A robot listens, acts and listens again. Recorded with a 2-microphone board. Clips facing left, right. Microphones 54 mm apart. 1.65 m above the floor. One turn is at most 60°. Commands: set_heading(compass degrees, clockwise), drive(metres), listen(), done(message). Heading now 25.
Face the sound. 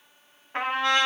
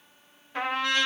set_heading(340)
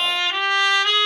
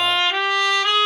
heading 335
done("Found it: a trumpet, straight ahead.")